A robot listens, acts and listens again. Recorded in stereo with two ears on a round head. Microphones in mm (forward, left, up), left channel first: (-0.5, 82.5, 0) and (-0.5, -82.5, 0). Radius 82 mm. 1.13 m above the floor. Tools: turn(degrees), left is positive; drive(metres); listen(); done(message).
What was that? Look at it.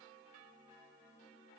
listen()
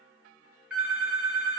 turn(degrees=-30)
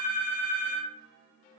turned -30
turn(degrees=-145)
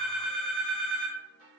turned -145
done("Facing the phone ringing, 1 to 2 m away.")